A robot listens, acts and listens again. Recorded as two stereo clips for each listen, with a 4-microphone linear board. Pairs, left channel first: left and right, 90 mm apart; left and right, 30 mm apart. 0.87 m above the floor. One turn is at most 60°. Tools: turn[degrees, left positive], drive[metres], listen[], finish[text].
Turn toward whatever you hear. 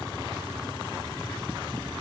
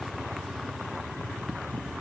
Action: listen[]
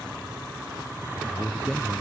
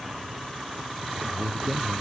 Action: turn[30]
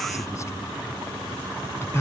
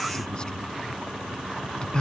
Thought: So it is at 150° left.
Action: turn[60]
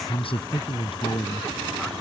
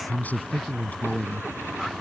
Thought: The man speaking is now 85° left.
Action: turn[60]
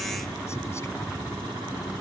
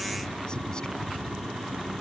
Thought: Nothing new. It was at 25° left.
Action: turn[25]
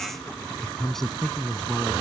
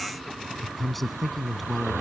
Action: finish[Found it: a man speaking, straight ahead.]